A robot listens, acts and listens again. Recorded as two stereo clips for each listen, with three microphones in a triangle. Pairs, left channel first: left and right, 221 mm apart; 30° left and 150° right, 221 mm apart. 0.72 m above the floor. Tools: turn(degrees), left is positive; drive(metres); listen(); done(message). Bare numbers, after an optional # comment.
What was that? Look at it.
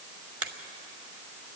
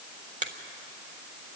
# The finger snap: 95° right.
turn(-95)
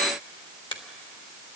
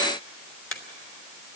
# The finger snap is now 25° left.
turn(25)
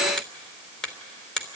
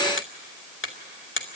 done("Facing the finger snap, 1 to 2 m away.")